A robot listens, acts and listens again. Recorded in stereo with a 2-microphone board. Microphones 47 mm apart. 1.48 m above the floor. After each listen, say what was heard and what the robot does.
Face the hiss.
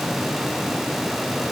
Keep listening.
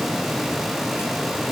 Keep listening.
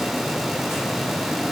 I can't make out a hiss to turn to.